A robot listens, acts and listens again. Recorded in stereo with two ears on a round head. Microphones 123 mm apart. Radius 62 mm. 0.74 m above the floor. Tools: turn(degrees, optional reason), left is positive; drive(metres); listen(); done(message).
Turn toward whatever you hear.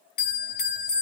turn(degrees=75, reason="The bell: about 75° left or 105° left.")
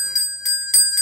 done("Facing the bell.")